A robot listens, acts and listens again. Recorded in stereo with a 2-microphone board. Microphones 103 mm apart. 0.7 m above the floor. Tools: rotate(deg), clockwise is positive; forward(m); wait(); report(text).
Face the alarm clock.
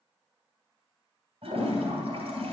wait()
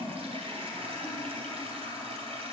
wait()
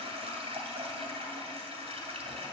report("I can't make out an alarm clock to turn to.")